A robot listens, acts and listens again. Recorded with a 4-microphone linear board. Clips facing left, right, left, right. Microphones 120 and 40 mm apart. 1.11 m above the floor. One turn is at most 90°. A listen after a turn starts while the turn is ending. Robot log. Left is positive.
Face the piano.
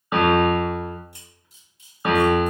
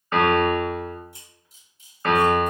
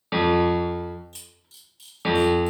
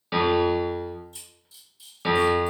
cmd yaw +30
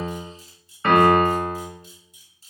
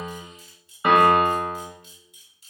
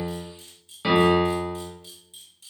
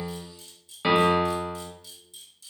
note: So it is at 15° right.
cmd yaw -15
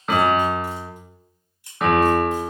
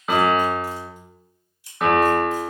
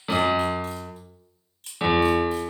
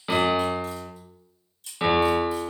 end: Facing the piano, under 1 m away.